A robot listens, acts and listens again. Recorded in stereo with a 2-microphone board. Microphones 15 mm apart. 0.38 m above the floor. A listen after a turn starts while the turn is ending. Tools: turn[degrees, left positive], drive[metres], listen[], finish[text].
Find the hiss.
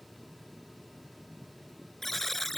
Action: listen[]
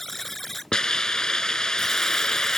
Thought: The hiss: about 55° left or 125° left.
Action: turn[55]
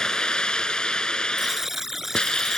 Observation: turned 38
Thought: So it is at 85° left.
Action: turn[85]
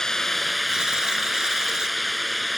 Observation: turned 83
Action: finish[Facing the hiss.]